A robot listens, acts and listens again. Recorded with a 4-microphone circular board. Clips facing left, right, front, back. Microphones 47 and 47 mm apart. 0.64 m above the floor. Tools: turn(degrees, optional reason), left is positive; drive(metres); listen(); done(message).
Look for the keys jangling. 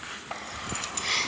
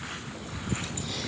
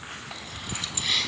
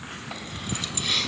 turn(degrees=80, reason="The keys jangling: 80° left.")
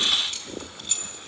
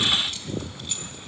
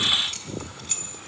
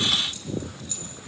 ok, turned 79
done("Facing the keys jangling, over 4 m away.")